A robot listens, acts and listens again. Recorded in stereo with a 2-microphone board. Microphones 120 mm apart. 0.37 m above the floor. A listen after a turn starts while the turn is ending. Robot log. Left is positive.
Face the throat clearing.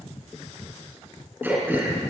note: The throat clearing: about 15° right or 165° right.
cmd yaw -15
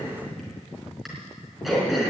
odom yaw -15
end: Found it: throat clearing, straight ahead, over 4 m away.